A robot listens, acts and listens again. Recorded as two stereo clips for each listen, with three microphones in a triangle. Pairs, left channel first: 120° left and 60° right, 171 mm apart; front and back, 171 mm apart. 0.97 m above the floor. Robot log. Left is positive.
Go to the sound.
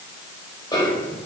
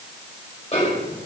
note: The snare drum: 55° left.
cmd yaw +55
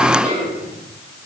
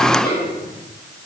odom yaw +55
note: The snare drum is now 15° right.
cmd yaw -15
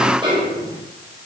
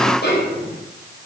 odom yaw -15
cmd fwd 1.0
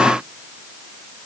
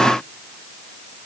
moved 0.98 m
cmd idle
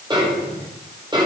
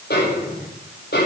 cmd fwd 1.0
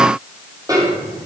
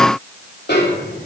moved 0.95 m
note: The snare drum is now 10° left.
cmd yaw +10
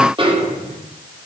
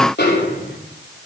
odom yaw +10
cmd fwd 1.0
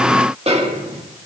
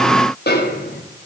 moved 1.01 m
cmd fwd 1.0
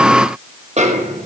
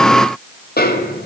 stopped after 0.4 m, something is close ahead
note: The snare drum is now 15° right.
cmd yaw -15
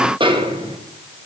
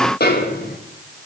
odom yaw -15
end: Arrived at the snare drum, straight ahead.